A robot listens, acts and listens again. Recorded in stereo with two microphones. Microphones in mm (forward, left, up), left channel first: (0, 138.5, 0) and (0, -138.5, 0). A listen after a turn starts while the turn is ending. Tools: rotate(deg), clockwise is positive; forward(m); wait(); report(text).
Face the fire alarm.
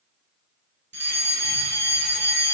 rotate(40)
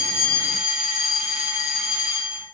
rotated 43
report("Facing the fire alarm, 2 to 4 m away.")